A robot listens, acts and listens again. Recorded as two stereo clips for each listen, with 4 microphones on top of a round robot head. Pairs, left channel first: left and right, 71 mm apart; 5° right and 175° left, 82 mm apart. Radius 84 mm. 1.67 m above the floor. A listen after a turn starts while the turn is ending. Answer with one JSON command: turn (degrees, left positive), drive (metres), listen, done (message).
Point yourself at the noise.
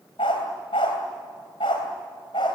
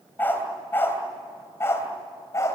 {"turn": 50}
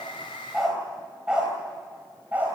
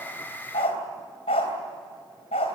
{"turn": -15}
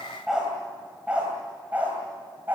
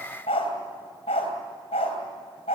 {"turn": -15}
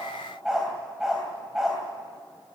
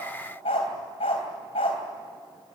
{"done": "Facing the dog barking, 2 to 4 m away."}